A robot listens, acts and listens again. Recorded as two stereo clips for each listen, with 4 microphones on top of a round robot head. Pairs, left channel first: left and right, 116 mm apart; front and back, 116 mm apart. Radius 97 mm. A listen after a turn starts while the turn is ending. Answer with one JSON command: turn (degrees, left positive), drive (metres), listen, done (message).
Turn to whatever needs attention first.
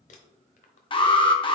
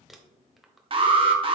{"turn": 135}
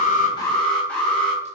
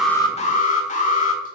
{"done": "Found it: an alarm, straight ahead, 1 to 2 m away."}